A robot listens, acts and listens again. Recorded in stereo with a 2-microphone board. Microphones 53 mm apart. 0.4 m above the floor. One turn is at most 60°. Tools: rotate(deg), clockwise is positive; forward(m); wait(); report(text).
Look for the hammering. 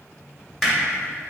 rotate(-30)
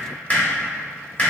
rotate(-60)
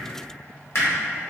rotate(-60)
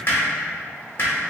rotate(-55)
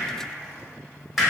report("Found it: hammering, straight ahead.")